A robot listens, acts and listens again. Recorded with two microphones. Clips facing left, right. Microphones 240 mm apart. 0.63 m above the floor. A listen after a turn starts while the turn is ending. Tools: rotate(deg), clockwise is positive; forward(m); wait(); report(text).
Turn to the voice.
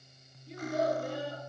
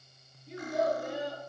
rotate(-30)
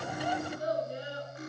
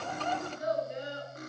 rotate(-145)
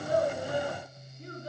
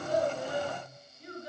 rotate(-40)
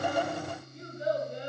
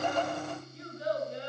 rotate(-15)
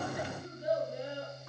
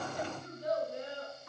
rotate(-10)
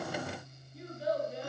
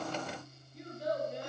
report("Found it: a child speaking, straight ahead.")